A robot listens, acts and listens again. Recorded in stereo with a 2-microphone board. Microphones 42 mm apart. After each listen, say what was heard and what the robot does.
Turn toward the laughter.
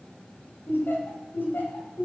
The laughter: about 55° left or 125° left. Turn 55° left.
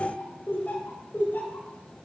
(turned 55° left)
So it is at 55° left. Turn 55° left.
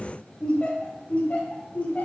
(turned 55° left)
The laughter is now 40° left. Turn 40° left.
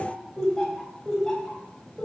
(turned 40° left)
The laughter is now 10° left. Turn 10° left.
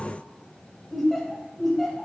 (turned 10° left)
Facing the laughter.